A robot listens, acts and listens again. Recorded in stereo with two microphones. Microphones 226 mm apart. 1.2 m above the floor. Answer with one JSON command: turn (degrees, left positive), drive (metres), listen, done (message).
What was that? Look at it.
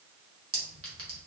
{"turn": -75}
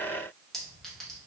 {"done": "Facing the clink, 1 to 2 m away."}